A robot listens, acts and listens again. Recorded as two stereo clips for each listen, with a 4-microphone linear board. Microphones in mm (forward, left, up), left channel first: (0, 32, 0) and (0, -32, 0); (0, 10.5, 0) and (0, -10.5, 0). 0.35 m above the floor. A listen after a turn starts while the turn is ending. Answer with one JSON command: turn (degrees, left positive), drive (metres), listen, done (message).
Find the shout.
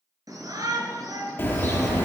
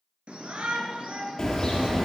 {"turn": -75}
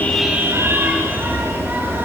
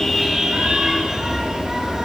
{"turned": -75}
{"listen": true}
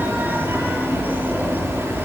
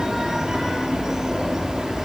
{"listen": true}
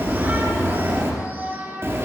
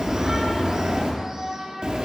{"turn": -30}
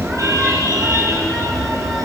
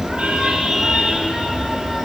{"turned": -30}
{"listen": true}
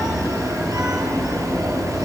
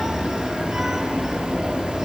{"listen": true}
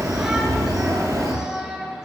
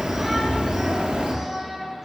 {"turn": -10}
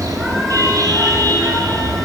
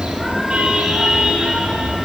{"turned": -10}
{"listen": true}
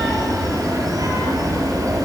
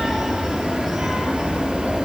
{"listen": true}
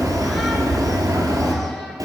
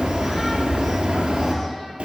{"done": "Facing where the shout came from. I can't hear it now."}